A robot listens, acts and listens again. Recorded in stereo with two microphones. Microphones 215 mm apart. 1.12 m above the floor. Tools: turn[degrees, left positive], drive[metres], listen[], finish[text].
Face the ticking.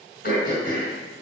Action: listen[]
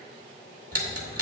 Action: turn[-90]
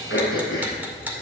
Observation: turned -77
Thought: So it is at 10° right.
Action: turn[-10]
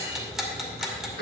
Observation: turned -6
Action: finish[Facing the ticking, 2 to 4 m away.]